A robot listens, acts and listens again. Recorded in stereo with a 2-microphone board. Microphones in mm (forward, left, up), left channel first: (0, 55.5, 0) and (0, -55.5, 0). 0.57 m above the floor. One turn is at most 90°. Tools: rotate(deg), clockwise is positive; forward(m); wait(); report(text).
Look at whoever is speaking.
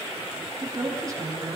rotate(30)
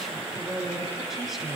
report("Found it: a woman speaking, straight ahead, over 4 m away.")